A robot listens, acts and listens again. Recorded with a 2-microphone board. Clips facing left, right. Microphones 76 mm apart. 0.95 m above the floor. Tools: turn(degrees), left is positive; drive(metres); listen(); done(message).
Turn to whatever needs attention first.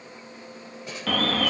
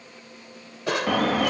turn(degrees=-30)
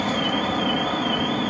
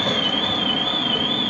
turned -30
turn(degrees=15)
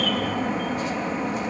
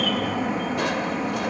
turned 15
done("Found it: an alarm, straight ahead.")